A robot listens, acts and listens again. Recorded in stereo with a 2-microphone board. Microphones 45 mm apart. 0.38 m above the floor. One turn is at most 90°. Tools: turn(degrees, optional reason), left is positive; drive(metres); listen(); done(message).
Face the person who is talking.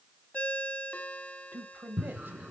turn(degrees=-55, reason="The man speaking: about 55° right or 125° right.")
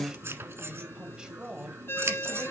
turn(degrees=-20, reason="So it is at 20° right.")
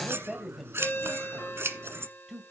done("Facing the man speaking.")